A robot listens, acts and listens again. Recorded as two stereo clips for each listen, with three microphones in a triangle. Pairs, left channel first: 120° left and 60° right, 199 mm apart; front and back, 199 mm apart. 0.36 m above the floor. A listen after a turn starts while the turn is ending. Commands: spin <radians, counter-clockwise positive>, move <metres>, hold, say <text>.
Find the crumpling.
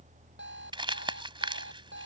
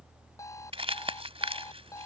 spin -2.09
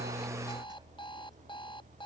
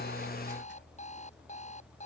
hold
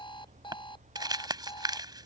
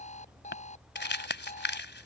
spin 0.17
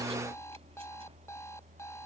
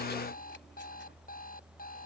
hold
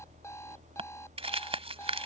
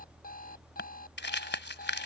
say Facing the crumpling.